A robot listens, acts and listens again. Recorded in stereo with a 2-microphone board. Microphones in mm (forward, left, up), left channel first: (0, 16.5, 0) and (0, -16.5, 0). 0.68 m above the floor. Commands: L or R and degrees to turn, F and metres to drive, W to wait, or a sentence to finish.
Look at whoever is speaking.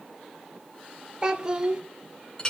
R25
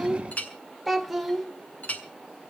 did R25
Found it: a child speaking, straight ahead, 1 to 2 m away.